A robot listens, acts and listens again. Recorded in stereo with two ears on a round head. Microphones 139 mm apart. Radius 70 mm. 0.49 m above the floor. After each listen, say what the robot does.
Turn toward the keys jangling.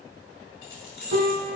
Turn 65° left.
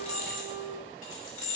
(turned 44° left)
Turn 55° left.
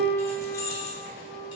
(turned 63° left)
Turn 25° left.
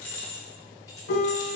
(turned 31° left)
Turn 15° left.
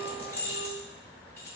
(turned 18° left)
Turn 15° left.
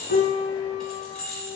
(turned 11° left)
Facing the keys jangling.